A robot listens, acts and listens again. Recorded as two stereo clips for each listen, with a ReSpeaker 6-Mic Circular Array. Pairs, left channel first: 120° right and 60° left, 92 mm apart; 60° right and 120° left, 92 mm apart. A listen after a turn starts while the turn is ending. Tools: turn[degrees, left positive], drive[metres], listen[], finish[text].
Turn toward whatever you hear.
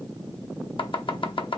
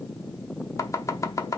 Thought: The chopping: 115° right.
Action: turn[-115]
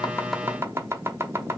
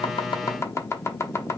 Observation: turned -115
Action: finish[Facing the chopping, under 1 m away.]